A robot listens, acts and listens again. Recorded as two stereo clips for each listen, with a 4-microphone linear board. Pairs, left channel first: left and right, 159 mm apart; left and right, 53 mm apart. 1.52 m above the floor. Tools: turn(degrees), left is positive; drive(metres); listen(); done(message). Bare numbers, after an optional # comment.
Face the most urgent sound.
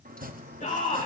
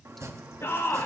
# The shout: about 50° left or 130° left.
turn(50)
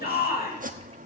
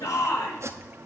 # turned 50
# So it is at 80° left.
turn(80)
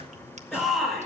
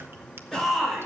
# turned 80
done("Found it: a shout, straight ahead.")